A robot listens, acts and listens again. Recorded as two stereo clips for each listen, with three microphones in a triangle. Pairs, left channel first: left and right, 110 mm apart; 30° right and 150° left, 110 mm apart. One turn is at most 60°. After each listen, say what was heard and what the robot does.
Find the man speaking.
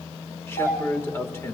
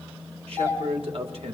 The man speaking: 155° left. Turn 60° left.
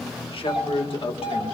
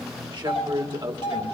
The man speaking is now 115° left. Turn 60° left.
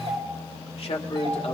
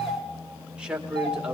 The man speaking is now 70° left. Turn 60° left.
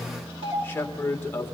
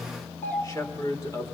The man speaking is now 25° left. Turn 25° left.
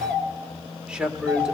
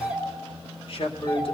The man speaking is now 10° right. Turn 10° right.
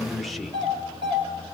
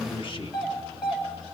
Found it: a man speaking, straight ahead.